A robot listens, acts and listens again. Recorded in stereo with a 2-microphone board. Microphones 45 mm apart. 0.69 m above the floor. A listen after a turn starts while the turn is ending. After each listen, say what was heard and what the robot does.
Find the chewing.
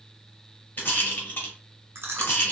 The chewing: about 70° right or 110° right. Turn 70° right.
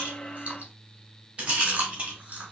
So it is at 35° right. Turn 35° right.
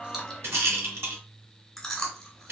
The chewing is now 10° left. Turn 10° left.
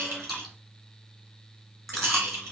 Found it: chewing, straight ahead.